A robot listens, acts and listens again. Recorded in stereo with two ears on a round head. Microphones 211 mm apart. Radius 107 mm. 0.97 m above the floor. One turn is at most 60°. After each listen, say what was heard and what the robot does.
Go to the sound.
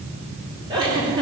The giggle: about 20° right or 160° right. Turn 20° right.
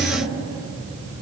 Keep listening.
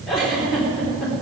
Drive 1.0 m forward.
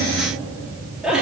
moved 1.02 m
Drive 1.0 m forward.
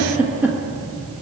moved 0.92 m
The giggle is now 10° right. Turn 10° right.
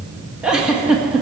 Drive 1.0 m forward.
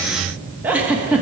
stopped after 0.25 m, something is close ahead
The giggle is now 10° right. Turn 10° right.
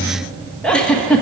Arrived at the giggle, straight ahead.